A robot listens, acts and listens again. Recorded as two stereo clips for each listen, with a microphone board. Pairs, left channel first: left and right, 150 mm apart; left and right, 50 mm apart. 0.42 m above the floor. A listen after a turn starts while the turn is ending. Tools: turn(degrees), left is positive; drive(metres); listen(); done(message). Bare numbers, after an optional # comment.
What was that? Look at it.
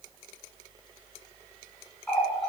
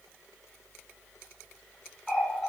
turn(30)
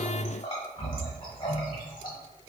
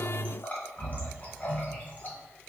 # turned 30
# So it is at 140° left.
turn(140)
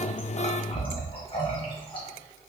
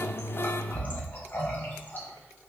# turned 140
# The running tap is now 40° left.
turn(40)
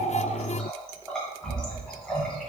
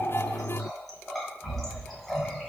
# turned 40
done("Facing the running tap.")